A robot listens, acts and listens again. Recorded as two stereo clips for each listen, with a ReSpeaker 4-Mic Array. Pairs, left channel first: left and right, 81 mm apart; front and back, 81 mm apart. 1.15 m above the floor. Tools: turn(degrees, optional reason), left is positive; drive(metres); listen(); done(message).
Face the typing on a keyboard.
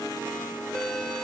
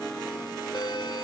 listen()
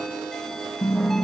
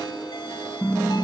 turn(degrees=60, reason="The typing on a keyboard: 60° left.")
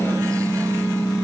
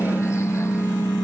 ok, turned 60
turn(degrees=10, reason="The typing on a keyboard is now 10° left.")
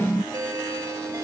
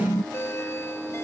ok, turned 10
done("Found it: typing on a keyboard, straight ahead.")